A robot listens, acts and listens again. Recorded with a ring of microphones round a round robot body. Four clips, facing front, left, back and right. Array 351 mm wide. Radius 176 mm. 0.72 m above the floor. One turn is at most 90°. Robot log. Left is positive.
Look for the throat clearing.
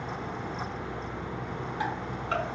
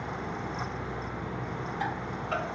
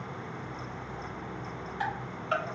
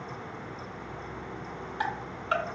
cmd idle
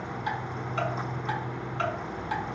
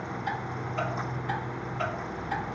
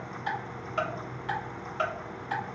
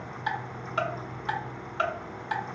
cmd idle
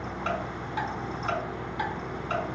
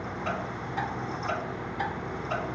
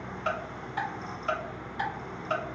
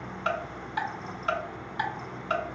end: I can't make out throat clearing, only ticking.